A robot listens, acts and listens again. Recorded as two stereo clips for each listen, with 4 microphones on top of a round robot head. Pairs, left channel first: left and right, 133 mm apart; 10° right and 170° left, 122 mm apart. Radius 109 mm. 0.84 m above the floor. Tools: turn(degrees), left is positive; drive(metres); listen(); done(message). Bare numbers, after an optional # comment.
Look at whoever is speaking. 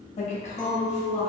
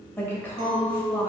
# The woman speaking: 65° left.
turn(65)
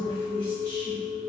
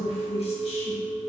# The woman speaking is now 15° left.
turn(15)
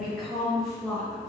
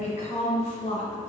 done("Facing the woman speaking, 1 to 2 m away.")